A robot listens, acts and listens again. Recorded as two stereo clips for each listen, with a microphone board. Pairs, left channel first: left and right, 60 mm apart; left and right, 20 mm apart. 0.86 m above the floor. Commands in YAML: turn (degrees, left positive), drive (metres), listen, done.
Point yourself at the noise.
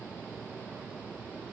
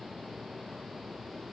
listen: true
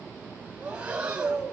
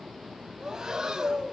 turn: -20
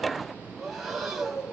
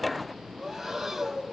done: "Facing the breathing, over 4 m away."